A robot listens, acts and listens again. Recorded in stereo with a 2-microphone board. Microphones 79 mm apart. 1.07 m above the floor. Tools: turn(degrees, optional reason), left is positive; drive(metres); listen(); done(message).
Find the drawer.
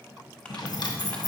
turn(degrees=65, reason="The drawer: about 65° left or 115° left.")
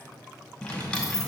turn(degrees=15, reason="So it is at 15° left.")
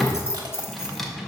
done("Found it: a drawer, straight ahead.")